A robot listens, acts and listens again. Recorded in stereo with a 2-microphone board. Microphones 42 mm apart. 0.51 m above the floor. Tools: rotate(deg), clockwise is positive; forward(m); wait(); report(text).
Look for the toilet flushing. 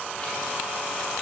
wait()
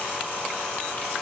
wait()
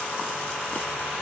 report("I can't make out a toilet flushing to turn to.")